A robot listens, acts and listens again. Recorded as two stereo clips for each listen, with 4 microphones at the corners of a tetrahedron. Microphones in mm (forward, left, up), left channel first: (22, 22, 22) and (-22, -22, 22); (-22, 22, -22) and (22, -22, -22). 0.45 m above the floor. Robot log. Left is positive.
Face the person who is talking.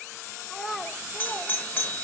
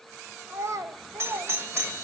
note: The child speaking: 45° right.
cmd yaw -45
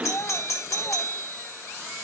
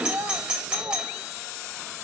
end: Facing the child speaking.